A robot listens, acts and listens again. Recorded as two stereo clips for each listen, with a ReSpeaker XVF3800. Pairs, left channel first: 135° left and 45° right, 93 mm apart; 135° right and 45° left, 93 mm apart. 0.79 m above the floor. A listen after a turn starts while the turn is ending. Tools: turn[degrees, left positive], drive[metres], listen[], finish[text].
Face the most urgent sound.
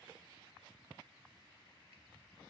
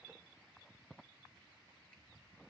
Action: listen[]
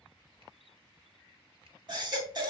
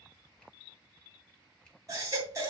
Action: finish[Found it: a baby crying, straight ahead, 2 to 4 m away.]